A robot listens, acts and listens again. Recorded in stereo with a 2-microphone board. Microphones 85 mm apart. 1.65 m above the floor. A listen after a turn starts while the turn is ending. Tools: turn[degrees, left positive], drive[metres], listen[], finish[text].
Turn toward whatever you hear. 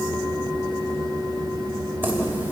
Thought: The keys jangling: about 25° right or 155° right.
Action: turn[-25]
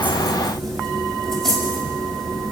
Action: finish[Found it: keys jangling, straight ahead.]